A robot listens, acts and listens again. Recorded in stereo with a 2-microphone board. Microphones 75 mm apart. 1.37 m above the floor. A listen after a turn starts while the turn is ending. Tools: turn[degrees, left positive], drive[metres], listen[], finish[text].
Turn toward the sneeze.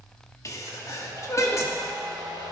Thought: The sneeze: about 45° left or 135° left.
Action: turn[45]
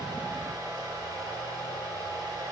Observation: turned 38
Action: listen[]
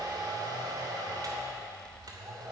Action: finish[I heard a sneeze, but can't make it out now. It was about 10° left or 95° left.]